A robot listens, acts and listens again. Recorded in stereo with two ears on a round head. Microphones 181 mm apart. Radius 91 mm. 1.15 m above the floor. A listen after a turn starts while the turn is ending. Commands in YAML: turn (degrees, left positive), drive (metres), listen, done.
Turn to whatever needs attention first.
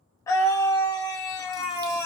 turn: 20
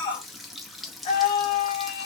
turn: 140
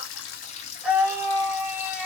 done: "Found it: a scream, straight ahead."